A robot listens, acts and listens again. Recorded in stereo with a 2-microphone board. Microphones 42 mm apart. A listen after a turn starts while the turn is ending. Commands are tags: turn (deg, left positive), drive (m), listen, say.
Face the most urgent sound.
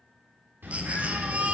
<turn deg="-30"/>
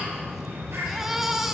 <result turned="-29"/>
<turn deg="-10"/>
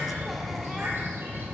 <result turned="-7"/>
<listen/>
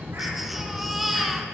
<say>Facing the baby crying, under 1 m away.</say>